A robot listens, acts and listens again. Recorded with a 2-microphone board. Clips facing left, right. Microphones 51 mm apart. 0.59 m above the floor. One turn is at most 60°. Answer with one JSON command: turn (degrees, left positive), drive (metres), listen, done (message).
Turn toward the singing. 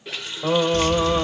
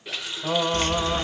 {"turn": 50}
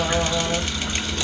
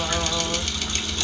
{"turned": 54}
{"listen": true}
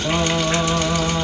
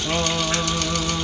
{"listen": true}
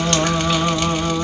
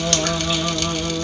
{"turn": 55}
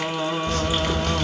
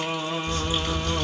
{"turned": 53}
{"done": "Facing the singing."}